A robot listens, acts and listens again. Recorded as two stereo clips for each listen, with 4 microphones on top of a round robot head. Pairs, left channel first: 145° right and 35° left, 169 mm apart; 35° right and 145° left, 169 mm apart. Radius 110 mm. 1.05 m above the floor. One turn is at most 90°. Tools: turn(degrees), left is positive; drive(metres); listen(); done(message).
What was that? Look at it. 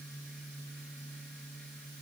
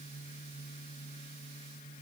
listen()
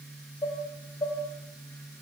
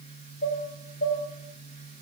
turn(degrees=-75)
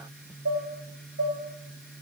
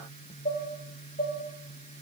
turn(degrees=20)
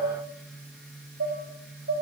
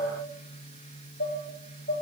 done("Facing the dishes clattering.")